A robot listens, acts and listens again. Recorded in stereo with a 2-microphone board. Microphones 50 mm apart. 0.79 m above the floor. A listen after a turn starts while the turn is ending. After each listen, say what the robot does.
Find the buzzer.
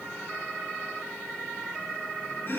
Keep listening.
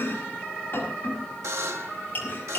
Turn 90° right.
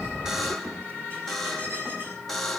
Facing the buzzer, 1 to 2 m away.